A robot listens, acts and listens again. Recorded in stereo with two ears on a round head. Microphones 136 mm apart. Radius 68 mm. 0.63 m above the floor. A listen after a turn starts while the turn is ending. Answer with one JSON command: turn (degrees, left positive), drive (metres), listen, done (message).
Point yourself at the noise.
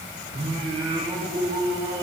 {"turn": -30}
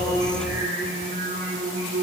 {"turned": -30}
{"turn": -125}
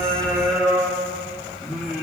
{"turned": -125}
{"done": "Found it: singing, straight ahead, over 4 m away."}